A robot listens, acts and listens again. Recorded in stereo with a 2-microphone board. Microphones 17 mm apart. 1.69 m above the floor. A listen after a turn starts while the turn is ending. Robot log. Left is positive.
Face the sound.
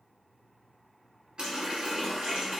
note: The running tap: about 55° right or 125° right.
cmd yaw -55
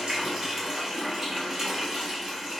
note: So it is at 35° right.
cmd yaw -35
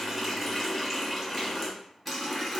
end: Found it: a running tap, straight ahead, 1 to 2 m away.